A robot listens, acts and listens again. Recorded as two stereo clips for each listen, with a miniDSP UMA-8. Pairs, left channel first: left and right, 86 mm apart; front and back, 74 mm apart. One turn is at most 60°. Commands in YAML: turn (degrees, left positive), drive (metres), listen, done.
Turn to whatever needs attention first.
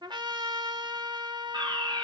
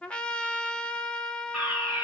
turn: -60
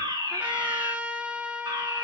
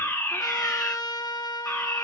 turn: -55
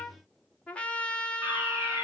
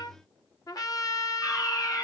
turn: -25
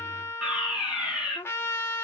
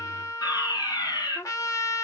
turn: -10
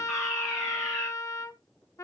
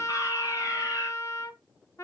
done: "Facing the fire alarm, over 4 m away."